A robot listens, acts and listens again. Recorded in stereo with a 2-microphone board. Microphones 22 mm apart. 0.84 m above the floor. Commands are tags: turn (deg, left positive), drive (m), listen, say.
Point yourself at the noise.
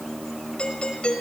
<turn deg="60"/>
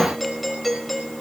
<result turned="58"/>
<say>Facing the doorbell.</say>